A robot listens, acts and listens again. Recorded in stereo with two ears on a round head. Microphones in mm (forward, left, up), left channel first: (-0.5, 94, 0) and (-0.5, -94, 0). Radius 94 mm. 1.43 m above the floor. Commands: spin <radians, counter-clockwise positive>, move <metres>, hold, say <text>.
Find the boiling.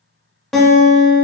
hold
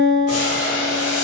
spin 1.57
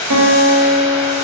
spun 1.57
spin 0.26
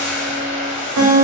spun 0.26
say Found it: boiling, straight ahead, 1 to 2 m away.